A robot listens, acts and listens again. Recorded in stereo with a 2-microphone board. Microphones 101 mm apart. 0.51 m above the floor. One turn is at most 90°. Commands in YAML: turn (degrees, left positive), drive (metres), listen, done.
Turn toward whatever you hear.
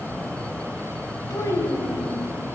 turn: 30
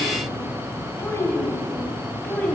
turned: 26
turn: 15
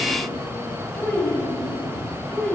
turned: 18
turn: 20
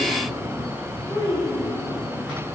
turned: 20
turn: 35
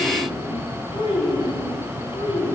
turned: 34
turn: 90
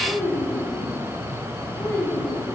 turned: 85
turn: 25
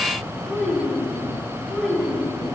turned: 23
done: "Found it: a child speaking, straight ahead."